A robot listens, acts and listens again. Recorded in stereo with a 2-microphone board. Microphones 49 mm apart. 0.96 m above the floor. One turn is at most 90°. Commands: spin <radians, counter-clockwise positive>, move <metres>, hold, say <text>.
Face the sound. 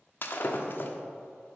spin 0.79
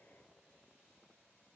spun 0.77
hold
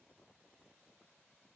say I heard breaking glass, but can't make it out now. It was about 5° left or 90° left.